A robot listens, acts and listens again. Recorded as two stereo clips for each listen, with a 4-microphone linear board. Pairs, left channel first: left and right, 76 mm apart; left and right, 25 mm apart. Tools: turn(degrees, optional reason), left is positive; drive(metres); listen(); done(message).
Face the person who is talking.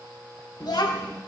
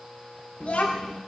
turn(degrees=65, reason="The child speaking: about 65° left or 115° left.")
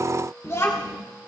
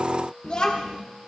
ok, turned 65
turn(degrees=40, reason="So it is at 40° left.")
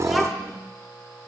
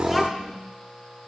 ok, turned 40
done("Found it: a child speaking, straight ahead, 1 to 2 m away.")